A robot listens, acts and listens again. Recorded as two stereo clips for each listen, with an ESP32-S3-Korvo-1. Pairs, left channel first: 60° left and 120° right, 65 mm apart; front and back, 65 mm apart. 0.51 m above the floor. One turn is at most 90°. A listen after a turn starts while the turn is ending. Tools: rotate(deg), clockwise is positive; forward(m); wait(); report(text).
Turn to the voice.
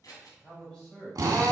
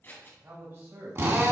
rotate(-90)
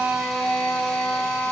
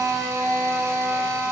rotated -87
rotate(-50)
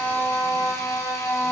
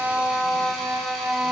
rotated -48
wait()
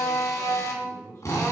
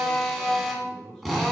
rotate(-85)
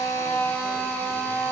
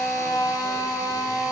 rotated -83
wait()
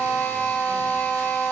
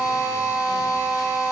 wait()
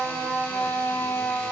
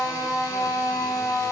report("Facing where the man speaking came from. I can't hear it now.")